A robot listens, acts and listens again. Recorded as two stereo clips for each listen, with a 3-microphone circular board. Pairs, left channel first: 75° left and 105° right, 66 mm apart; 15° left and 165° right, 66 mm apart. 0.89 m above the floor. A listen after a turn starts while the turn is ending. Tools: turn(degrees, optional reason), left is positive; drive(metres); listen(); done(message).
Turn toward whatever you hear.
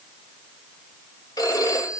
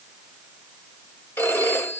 turn(degrees=65, reason="The phone ringing: 65° left.")
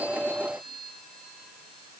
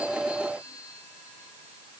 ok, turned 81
turn(degrees=-15, reason="Nothing new. It was at 15° right.")
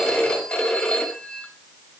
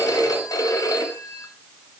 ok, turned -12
done("Facing the phone ringing, 2 to 4 m away.")